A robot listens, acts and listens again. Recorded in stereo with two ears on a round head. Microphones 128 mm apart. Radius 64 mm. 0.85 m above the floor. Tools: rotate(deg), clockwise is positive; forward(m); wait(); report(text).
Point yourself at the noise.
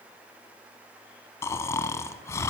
rotate(-20)
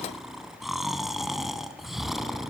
report("Found it: snoring, straight ahead, 1 to 2 m away.")